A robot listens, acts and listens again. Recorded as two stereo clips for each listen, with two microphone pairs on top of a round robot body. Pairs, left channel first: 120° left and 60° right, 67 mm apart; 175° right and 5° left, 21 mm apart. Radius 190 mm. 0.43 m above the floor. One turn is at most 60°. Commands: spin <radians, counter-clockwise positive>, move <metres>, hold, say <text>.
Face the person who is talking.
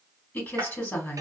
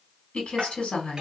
spin 1.05
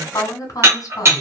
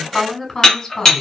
spin 1.05
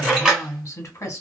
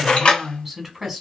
spin 1.05
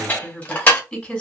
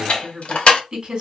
spin 0.70
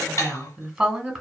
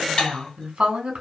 say Facing the woman speaking.